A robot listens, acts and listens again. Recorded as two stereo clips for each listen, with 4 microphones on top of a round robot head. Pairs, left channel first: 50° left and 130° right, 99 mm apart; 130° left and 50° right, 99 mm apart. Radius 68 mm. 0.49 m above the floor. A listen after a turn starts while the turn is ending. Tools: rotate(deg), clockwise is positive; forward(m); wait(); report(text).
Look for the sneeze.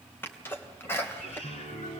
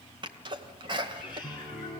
rotate(15)
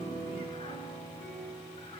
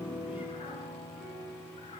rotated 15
report("Facing where the sneeze came from. I can't hear it now.")